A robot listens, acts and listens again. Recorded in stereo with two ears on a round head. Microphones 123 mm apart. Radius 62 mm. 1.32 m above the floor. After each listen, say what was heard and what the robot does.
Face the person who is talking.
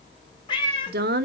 The woman speaking: about 70° right or 110° right. Turn 70° right.
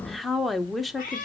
Facing the woman speaking, under 1 m away.